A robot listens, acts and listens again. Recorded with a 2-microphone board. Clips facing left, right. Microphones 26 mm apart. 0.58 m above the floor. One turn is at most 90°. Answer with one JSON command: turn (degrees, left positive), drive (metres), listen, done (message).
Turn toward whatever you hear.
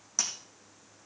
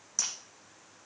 {"turn": 20}
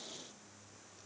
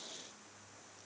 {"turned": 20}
{"listen": true}
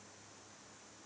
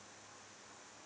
{"done": "I heard breaking glass, but can't make it out now. It was about straight ahead or 140° left."}